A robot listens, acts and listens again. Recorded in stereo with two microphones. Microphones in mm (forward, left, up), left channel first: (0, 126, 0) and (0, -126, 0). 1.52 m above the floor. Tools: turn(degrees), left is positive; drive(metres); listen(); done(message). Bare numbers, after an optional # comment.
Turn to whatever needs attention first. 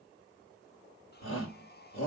# The shout: about 55° left or 125° left.
turn(55)
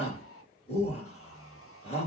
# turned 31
# So it is at 25° left.
turn(25)
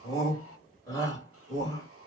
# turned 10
# The shout is now 15° left.
turn(15)
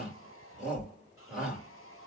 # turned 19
done("Facing the shout, 2 to 4 m away.")